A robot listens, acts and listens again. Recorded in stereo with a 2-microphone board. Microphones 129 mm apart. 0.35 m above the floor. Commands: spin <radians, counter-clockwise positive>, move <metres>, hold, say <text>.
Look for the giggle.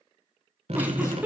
spin -0.52
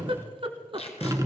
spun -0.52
spin -2.36
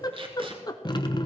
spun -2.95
spin 0.52
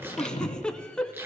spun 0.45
say Facing the giggle, under 1 m away.